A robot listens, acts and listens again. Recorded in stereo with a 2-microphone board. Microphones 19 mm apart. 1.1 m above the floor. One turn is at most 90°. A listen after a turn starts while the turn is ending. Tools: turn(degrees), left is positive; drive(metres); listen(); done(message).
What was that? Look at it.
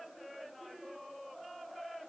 listen()
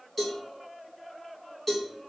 turn(degrees=30)
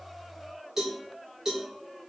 turn(degrees=-30)
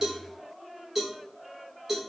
turn(degrees=-15)
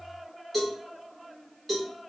done("Facing the cowbell, 1 to 2 m away.")